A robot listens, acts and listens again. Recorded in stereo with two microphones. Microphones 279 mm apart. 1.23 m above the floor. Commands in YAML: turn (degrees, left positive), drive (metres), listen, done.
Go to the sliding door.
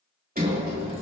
turn: -30
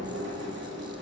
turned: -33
turn: -115
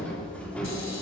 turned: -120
drive: 1.0
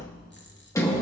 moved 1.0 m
turn: 10
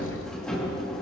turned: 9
drive: 1.0
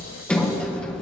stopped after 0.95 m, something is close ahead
done: "I am next to the sliding door."